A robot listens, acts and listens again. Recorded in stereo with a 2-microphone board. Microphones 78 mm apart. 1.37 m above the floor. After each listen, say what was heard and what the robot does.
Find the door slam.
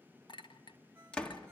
Turn 30° left.
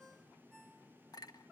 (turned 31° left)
Keep listening.
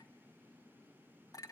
I heard a door slam, but can't make it out now. It was about 20° right or 135° left.